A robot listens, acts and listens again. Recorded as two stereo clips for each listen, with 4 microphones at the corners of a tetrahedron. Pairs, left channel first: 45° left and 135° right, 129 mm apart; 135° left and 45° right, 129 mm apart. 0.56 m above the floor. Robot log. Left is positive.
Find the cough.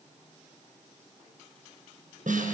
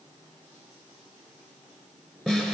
cmd idle
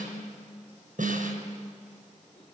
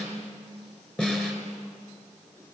cmd idle
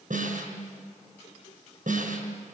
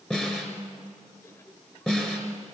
end: I can't make out a cough to turn to.